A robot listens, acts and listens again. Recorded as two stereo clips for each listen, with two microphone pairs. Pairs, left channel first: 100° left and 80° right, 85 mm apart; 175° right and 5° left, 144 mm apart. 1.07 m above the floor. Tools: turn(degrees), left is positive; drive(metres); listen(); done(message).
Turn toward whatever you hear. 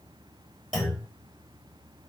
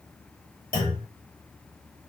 turn(degrees=-175)
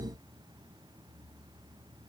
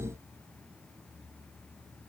done("Facing where the clunk came from. I can't hear it now.")